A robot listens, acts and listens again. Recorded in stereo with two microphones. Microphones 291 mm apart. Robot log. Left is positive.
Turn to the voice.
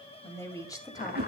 cmd yaw +30
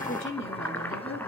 note: So it is at 135° left.
cmd yaw +135
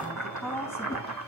note: The woman speaking is now 10° left.
cmd yaw +10
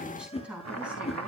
end: Found it: a woman speaking, straight ahead.